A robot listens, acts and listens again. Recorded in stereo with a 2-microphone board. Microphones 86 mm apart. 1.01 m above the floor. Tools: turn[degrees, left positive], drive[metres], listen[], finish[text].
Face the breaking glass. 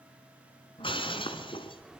Action: turn[90]
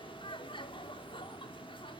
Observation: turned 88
Action: finish[I heard breaking glass from this way, but can't make it out now.]